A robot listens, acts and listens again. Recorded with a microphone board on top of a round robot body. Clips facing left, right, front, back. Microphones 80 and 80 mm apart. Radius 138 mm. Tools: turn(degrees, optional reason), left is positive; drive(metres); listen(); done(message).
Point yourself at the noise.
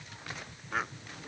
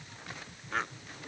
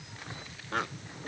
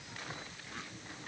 done("Found it: a bird, straight ahead.")